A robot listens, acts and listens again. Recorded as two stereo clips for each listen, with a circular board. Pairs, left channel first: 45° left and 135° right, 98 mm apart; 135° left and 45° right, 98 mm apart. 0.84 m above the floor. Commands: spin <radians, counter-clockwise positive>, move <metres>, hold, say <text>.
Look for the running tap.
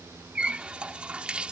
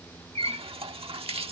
spin -0.96
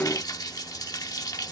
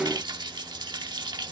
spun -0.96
say Facing the running tap.